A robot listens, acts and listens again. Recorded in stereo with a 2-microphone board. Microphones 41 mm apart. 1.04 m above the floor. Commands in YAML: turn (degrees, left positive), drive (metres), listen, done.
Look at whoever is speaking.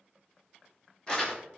listen: true
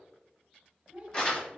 turn: -25
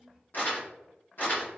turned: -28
done: "Facing the child speaking, 1 to 2 m away."